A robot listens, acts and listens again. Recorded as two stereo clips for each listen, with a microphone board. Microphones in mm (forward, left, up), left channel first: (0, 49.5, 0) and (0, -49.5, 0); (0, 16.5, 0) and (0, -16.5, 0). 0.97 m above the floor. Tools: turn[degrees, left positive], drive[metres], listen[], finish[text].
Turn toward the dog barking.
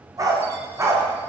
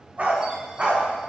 Thought: The dog barking: about 35° right or 145° right.
Action: turn[-35]
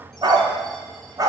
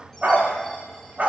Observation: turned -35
Thought: The dog barking: about 35° right or 145° right.
Action: turn[-35]
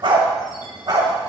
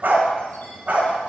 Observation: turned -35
Thought: The dog barking: about 45° right or 135° right.
Action: turn[-45]
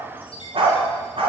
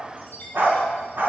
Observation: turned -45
Thought: So it is at 120° right.
Action: turn[-120]
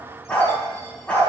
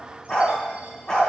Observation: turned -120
Thought: The dog barking is now 15° left.
Action: turn[15]
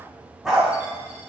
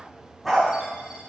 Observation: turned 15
Action: finish[Facing the dog barking.]